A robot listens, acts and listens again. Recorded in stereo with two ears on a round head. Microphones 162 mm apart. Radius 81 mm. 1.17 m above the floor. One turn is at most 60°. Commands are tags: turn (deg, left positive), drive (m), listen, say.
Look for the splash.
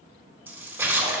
<turn deg="-30"/>
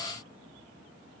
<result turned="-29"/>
<listen/>
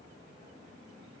<say>I heard a splash, but can't make it out now. It was about 20° left or 140° right.</say>